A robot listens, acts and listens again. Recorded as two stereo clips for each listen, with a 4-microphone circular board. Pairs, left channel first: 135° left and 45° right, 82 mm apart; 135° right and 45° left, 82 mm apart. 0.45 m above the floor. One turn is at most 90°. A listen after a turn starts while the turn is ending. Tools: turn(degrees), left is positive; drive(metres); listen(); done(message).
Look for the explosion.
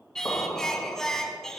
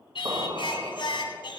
turn(degrees=75)
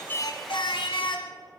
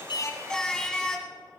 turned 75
done("Facing where the explosion came from. I can't hear it now.")